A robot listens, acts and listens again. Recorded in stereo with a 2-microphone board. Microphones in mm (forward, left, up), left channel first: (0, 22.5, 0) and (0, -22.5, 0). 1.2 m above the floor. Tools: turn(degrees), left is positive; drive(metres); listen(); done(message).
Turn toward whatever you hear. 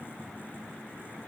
listen()
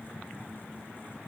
listen()
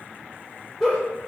turn(degrees=30)
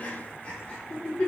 turn(degrees=145)
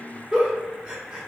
turn(degrees=-20)
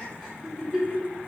done("Found it: a giggle, straight ahead, 1 to 2 m away.")